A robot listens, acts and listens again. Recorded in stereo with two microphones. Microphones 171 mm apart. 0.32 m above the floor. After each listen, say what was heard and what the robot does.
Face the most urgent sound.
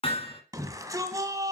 The shout: about 20° right or 160° right. Turn 20° right.
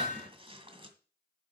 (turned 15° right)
Keep listening.
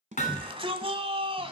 So it is at 145° right. Turn 145° right.
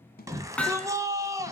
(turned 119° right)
The shout is now 20° right. Turn 20° right.
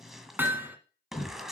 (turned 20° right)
Facing the shout.